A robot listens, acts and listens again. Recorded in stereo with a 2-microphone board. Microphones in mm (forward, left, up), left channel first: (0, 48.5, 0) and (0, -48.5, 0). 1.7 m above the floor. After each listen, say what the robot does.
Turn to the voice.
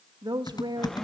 Turn 50° right.
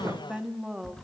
Found it: a woman speaking, straight ahead.